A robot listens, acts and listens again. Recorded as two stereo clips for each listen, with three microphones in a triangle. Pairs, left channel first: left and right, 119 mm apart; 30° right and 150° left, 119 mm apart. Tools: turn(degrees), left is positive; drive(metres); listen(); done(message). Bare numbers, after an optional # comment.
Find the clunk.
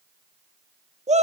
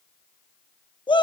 listen()
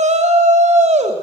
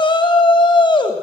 listen()
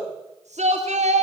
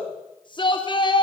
done("I can't make out a clunk, only a shout.")